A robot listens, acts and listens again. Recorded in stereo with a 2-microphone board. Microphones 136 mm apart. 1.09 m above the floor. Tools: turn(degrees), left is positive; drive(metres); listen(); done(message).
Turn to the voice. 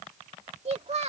turn(degrees=-50)
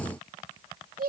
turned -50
turn(degrees=-80)
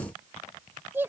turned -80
turn(degrees=-15)
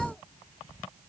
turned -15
listen()
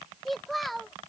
done("Facing the child speaking.")